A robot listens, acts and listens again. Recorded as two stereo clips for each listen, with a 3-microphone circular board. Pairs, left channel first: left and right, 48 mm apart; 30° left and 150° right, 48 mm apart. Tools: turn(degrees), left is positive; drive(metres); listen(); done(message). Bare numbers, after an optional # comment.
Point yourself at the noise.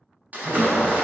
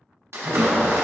# The splash: 145° right.
turn(-145)
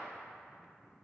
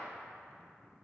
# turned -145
done("I heard a splash from this way, but can't make it out now.")